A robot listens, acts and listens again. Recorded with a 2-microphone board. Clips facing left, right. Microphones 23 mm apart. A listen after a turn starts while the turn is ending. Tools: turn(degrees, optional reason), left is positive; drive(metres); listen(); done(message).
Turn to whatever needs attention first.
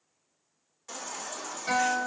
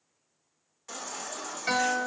turn(degrees=-30)
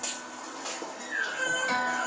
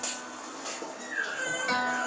turn(degrees=20, reason="So it is at 20° left.")
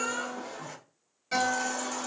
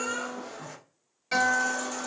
done("Found it: a baby crying, straight ahead.")